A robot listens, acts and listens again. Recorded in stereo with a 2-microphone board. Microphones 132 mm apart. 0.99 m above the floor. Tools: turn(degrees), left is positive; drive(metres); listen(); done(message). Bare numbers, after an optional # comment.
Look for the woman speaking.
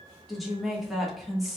turn(30)
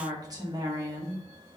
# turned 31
# So it is at 30° right.
turn(-30)
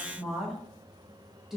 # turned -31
done("Found it: a woman speaking, straight ahead, 1 to 2 m away.")